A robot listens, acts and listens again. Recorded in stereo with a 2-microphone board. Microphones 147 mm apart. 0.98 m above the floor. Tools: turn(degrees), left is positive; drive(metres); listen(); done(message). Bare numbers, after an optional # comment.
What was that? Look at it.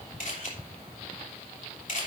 # The camera shutter: about 60° left or 120° left.
turn(60)
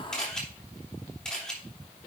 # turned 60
done("Facing the camera shutter, 2 to 4 m away.")